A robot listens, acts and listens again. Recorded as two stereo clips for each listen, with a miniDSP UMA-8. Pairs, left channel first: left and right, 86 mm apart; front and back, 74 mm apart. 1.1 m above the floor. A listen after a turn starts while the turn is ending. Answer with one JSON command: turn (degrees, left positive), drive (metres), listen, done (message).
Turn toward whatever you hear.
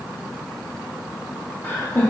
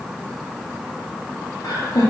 {"turn": 20}
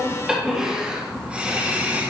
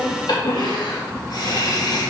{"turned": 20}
{"turn": -25}
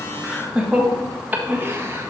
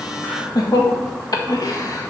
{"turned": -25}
{"turn": -35}
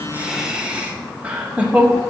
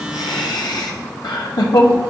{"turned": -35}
{"turn": -20}
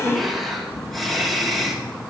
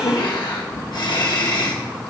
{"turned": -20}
{"done": "Facing the laughter, 1 to 2 m away."}